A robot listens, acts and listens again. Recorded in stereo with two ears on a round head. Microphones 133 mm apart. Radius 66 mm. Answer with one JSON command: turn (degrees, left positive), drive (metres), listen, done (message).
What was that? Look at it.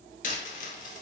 {"turn": 55}
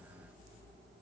{"listen": true}
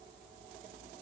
{"done": "I heard a dropped coin, but can't make it out now. It was about straight ahead or 70° left."}